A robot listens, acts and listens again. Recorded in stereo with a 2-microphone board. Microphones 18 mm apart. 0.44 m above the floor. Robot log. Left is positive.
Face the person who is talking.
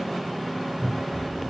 note: The child speaking: about 20° left or 160° left.
cmd yaw +20
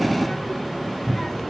note: The child speaking: about 30° left or 150° left.
cmd yaw +30
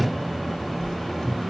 note: So it is at 135° left.
cmd yaw +135
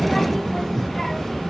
note: The child speaking is now 25° left.
cmd yaw +25
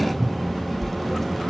end: Found it: a child speaking, straight ahead.